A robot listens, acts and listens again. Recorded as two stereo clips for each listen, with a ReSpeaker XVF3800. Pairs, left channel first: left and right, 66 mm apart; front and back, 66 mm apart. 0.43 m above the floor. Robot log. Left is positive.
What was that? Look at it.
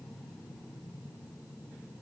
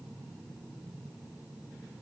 cmd idle
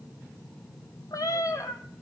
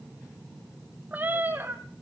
note: The cat meowing: 125° left.
cmd yaw +125
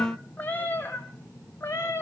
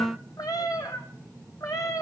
note: The cat meowing is now 35° left.
cmd yaw +35
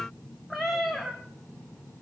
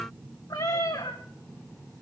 end: Found it: a cat meowing, straight ahead, 2 to 4 m away.